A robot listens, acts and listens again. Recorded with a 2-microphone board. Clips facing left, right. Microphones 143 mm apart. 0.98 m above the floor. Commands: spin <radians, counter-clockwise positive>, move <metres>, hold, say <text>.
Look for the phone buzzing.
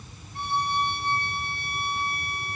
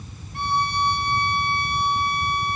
hold
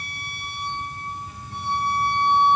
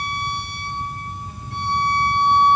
hold
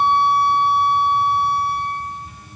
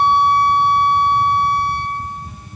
say I can't make out a phone buzzing to turn to.